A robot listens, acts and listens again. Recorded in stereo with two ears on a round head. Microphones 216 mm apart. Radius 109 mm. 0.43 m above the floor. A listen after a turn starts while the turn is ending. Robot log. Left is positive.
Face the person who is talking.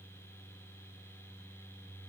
cmd idle
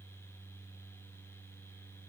cmd idle
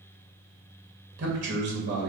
note: The man speaking: about 50° right or 130° right.
cmd yaw -50
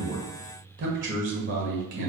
note: So it is at 65° right.
cmd yaw -65
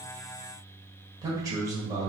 note: The man speaking is now 15° right.
cmd yaw -15
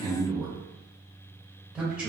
end: Found it: a man speaking, straight ahead.